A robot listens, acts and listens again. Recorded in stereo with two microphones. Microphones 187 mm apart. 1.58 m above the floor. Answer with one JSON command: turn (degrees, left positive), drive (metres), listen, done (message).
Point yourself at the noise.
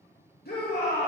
{"turn": 55}
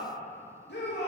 {"turn": 70}
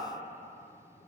{"listen": true}
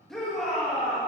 {"done": "Facing the shout."}